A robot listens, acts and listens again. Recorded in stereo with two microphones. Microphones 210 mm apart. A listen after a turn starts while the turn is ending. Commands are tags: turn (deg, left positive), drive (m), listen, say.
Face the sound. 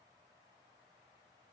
<listen/>
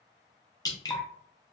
<turn deg="20"/>
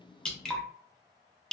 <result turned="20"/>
<say>Facing the dripping.</say>